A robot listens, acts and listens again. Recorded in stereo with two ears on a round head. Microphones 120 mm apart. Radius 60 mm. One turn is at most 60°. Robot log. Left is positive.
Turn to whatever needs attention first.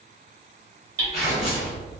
cmd idle
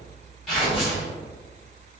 cmd idle
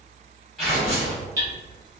end: I can't make out anything urgent to turn to.